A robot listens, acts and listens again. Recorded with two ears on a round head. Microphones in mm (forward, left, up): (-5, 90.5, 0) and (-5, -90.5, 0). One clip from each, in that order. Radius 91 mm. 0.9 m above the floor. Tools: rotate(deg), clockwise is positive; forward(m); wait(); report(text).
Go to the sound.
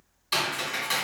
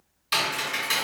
rotate(30)
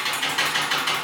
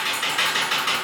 rotate(-20)
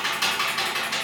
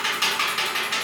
forward(1.0)
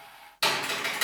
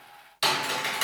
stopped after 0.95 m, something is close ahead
rotate(-10)
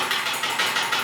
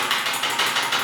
report("Arrived at the typing on a keyboard, straight ahead.")